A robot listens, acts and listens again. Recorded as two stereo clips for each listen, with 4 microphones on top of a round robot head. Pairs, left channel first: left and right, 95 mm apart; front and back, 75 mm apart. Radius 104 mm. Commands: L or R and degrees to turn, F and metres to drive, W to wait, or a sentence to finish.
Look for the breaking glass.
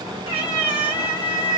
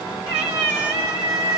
W
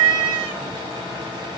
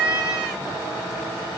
W
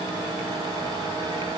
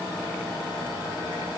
I can't make out breaking glass to turn to.